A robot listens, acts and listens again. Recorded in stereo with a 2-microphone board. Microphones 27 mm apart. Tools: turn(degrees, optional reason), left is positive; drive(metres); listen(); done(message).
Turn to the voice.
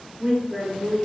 turn(degrees=-15, reason="The woman speaking: about 15° right or 165° right.")
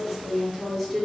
done("Facing the woman speaking.")